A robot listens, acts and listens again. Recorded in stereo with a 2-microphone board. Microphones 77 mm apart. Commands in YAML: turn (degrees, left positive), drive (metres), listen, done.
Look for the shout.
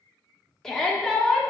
turn: 30
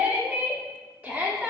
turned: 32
turn: -25
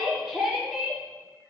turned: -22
done: "Found it: a shout, straight ahead."